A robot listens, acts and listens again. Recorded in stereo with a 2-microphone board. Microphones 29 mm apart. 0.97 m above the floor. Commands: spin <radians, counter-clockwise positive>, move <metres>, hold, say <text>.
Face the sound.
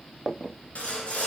spin 0.87
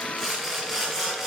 say Found it: sawing, straight ahead, 2 to 4 m away.